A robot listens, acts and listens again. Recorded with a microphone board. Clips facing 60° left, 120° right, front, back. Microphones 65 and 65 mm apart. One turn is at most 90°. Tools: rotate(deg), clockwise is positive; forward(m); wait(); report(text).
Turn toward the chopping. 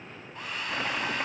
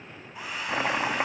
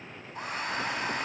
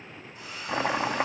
rotate(-90)
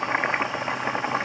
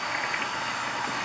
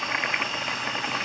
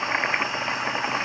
rotate(-90)
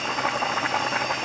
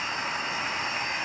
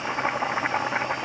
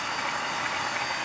rotate(-45)
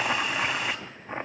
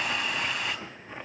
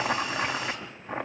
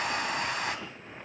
report("Found it: chopping, straight ahead, 1 to 2 m away.")